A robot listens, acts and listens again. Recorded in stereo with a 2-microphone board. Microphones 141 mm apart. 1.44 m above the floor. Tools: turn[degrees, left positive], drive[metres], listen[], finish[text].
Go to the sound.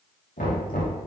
Action: turn[90]
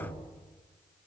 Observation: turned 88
Action: listen[]
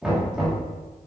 Action: drive[1.0]
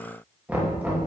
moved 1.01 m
Thought: The knocking is now 10° right.
Action: turn[-10]
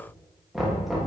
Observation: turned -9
Action: drive[1.0]
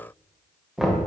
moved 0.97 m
Action: drive[1.0]
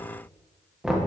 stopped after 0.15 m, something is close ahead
Action: finish[Arrived at the knocking, straight ahead.]